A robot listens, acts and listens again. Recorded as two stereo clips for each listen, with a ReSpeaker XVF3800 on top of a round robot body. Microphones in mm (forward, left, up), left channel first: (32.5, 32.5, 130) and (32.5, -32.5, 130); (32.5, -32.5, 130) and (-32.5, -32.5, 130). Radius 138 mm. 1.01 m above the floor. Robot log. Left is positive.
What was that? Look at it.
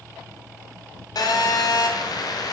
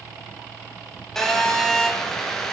note: The phone buzzing: 85° left.
cmd yaw +85
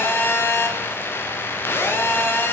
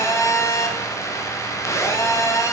note: The phone buzzing is now 35° left.
cmd yaw +35
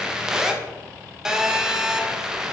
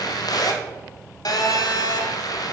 note: The phone buzzing is now 10° right.
cmd yaw -10
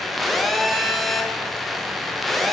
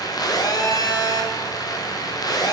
end: Facing the phone buzzing, 1 to 2 m away.